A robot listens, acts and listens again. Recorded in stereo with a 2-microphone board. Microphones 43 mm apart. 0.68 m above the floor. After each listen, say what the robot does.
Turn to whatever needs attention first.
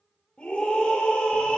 Turn 25° left.
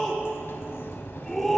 Turn 10° left.
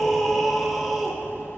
Facing the scream.